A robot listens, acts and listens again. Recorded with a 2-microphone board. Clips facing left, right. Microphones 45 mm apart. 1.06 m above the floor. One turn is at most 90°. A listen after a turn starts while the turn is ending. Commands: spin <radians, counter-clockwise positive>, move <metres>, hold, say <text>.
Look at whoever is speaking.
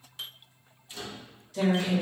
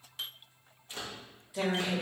spin -0.35
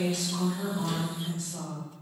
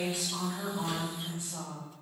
spin -0.44
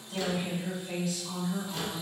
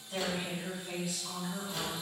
spin -0.26
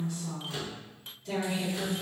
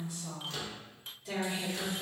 spin -0.52
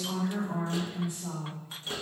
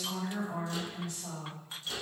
spin 0.35
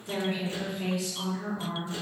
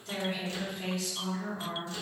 spin 0.17
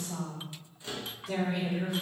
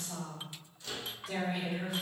say Facing the woman speaking.